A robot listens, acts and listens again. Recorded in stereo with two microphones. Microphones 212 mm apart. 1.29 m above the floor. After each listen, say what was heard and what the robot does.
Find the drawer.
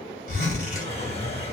The drawer: about 30° left or 150° left. Turn 30° left.
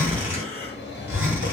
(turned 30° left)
So it is at 120° left. Turn 120° left.
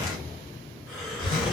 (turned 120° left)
Keep listening.
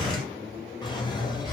The drawer is now 20° left. Turn 20° left.
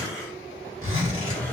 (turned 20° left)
The drawer is now 10° left. Turn 10° left.
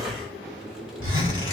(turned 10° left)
Facing the drawer, 1 to 2 m away.